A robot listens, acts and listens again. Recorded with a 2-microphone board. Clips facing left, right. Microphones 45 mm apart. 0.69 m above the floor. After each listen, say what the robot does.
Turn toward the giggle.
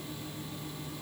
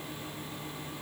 Keep listening.
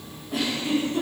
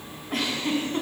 Turn 55° right.
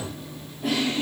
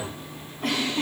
Turn 70° right.
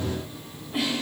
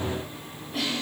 Turn 15° left.
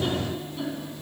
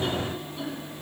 Found it: a giggle, straight ahead, 2 to 4 m away.